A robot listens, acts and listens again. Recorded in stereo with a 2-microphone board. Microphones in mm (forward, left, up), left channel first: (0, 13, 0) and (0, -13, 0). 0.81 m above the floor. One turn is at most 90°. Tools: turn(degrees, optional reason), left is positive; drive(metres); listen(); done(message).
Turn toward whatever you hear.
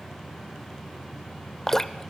turn(degrees=30)
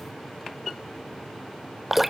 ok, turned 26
turn(degrees=-10, reason="So it is at 10° right.")
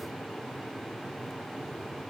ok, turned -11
listen()
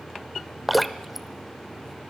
done("Found it: dripping, straight ahead, under 1 m away.")